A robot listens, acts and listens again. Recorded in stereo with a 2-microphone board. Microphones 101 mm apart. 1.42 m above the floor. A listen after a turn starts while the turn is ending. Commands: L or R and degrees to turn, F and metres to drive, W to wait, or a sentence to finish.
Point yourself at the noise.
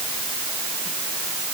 W
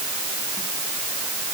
W
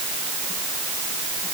I can't make out anything.